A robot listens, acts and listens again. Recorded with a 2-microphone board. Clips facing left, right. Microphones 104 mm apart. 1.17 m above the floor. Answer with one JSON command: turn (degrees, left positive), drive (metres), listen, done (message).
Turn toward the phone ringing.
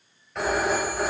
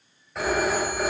{"turn": 30}
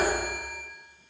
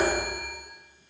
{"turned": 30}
{"turn": -30}
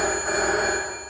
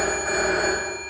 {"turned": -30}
{"done": "Found it: a phone ringing, straight ahead."}